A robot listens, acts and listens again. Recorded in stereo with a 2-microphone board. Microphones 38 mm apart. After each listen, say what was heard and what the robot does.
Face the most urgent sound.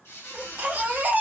The baby crying: about 40° right or 140° right. Turn 40° right.
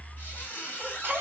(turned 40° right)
So it is at 90° right. Turn 90° right.
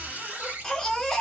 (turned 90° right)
The baby crying is now 10° left. Turn 10° left.
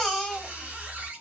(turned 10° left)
Found it: a baby crying, straight ahead, under 1 m away.